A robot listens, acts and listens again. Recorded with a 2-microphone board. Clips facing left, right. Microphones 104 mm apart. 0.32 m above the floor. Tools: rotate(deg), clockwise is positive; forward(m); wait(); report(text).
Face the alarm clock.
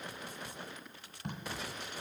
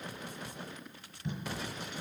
wait()
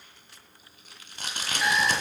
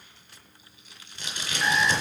rotate(-30)
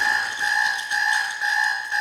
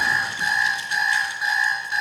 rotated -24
rotate(10)
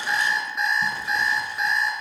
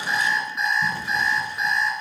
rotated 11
report("Found it: an alarm clock, straight ahead.")